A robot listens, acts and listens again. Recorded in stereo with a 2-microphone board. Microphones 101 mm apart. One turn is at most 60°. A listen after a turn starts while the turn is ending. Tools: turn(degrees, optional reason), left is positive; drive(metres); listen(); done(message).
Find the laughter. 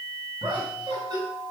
turn(degrees=-40, reason="The laughter: about 40° right or 140° right.")
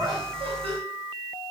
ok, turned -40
listen()
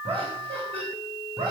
turn(degrees=-60, reason="So it is at 115° right.")
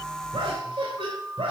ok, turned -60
turn(degrees=-55, reason="The laughter is now 55° right.")
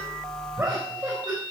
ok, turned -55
done("Found it: laughter, straight ahead.")